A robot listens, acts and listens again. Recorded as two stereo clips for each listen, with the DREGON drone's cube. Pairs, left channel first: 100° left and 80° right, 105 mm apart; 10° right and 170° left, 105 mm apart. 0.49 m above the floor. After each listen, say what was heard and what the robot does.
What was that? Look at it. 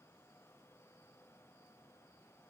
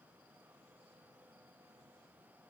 Keep listening.
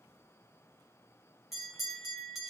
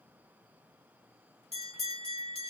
The bell: 10° left. Turn 10° left.
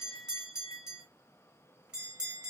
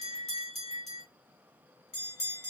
Found it: a bell, straight ahead, 2 to 4 m away.